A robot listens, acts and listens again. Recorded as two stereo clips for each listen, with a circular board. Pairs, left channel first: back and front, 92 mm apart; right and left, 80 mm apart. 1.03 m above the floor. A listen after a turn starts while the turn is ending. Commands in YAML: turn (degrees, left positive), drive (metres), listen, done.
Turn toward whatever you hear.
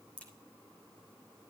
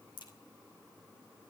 turn: -105
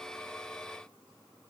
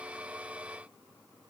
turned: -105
done: "I heard a crack from this way, but can't make it out now."